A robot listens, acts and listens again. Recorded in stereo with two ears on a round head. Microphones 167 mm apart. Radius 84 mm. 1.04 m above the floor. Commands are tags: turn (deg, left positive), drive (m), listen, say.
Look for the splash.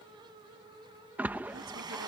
<turn deg="-30"/>
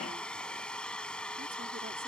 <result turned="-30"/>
<listen/>
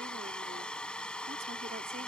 <say>I heard a splash, but can't make it out now. It was about 20° left or 140° right.</say>